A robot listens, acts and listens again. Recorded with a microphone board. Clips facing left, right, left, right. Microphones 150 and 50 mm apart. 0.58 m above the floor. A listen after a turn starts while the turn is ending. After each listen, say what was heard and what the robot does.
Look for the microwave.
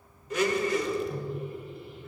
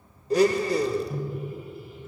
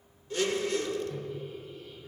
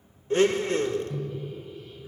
Turn 30° right.
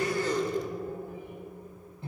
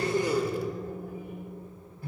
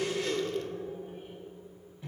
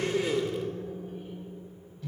So it is at 25° left. Turn 25° left.
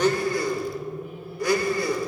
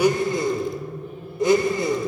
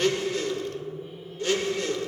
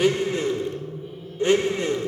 The microwave is now 10° left. Turn 10° left.
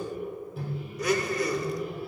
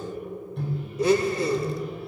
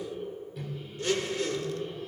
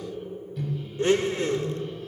Facing the microwave.